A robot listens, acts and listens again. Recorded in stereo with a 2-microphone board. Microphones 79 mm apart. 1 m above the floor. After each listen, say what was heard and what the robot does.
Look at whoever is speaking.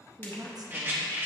The woman speaking: about 55° right or 125° right. Turn 55° right.
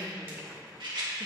Keep listening.
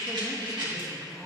Keep listening.
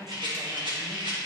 Facing the woman speaking, 1 to 2 m away.